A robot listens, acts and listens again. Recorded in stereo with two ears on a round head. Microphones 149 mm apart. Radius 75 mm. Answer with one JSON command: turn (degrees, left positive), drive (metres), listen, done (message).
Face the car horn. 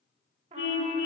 {"turn": 70}
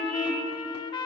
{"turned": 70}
{"done": "Found it: a car horn, straight ahead."}